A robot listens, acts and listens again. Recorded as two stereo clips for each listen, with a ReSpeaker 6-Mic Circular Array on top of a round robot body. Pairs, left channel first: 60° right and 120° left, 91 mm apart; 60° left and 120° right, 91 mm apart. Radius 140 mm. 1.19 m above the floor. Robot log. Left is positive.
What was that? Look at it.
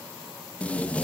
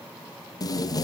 note: The tape being pulled: 15° left.
cmd yaw +15
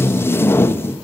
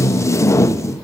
end: Facing the tape being pulled, under 1 m away.